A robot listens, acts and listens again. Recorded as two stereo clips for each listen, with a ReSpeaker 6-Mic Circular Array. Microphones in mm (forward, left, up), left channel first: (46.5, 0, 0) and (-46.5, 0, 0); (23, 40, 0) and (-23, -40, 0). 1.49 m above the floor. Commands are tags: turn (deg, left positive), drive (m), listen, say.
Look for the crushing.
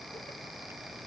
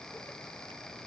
<listen/>
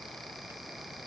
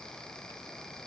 <listen/>
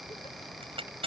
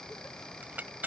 <turn deg="170"/>
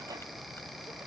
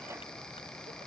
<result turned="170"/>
<listen/>
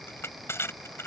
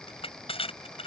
<turn deg="65"/>
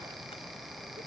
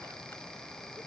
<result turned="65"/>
<listen/>
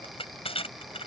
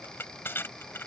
<say>Facing the crushing.</say>